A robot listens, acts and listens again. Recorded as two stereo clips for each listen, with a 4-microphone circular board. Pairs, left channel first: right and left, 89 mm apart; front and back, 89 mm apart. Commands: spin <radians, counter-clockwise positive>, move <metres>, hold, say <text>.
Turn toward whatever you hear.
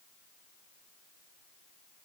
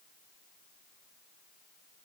hold
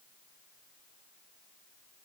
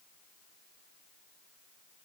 hold
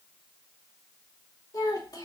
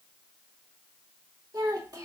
spin -2.36
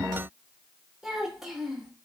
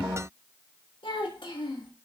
say Facing the child speaking, 1 to 2 m away.